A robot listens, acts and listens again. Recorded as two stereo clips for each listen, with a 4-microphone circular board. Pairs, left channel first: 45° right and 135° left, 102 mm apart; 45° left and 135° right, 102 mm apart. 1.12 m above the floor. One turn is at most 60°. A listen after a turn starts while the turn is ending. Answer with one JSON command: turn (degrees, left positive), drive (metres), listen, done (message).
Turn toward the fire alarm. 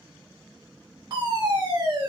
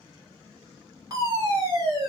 {"turn": 60}
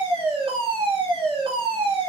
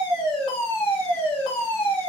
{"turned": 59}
{"turn": 60}
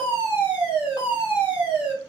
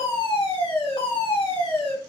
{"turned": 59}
{"turn": 60}
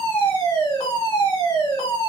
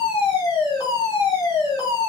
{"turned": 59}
{"done": "Facing the fire alarm, 1 to 2 m away."}